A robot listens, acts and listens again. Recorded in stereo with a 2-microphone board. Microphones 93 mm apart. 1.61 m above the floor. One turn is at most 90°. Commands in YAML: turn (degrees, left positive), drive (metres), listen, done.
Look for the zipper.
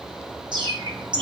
listen: true
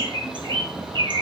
listen: true
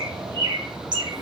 done: "I can't make out a zipper, only a bird."